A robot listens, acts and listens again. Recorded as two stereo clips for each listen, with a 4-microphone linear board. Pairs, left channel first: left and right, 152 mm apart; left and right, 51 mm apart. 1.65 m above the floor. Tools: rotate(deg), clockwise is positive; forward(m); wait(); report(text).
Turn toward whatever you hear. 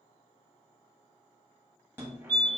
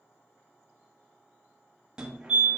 rotate(30)
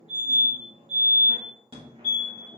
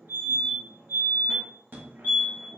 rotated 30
rotate(135)
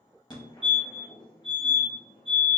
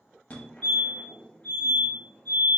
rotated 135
rotate(-35)
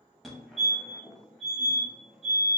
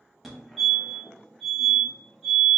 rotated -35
report("Facing the fire alarm.")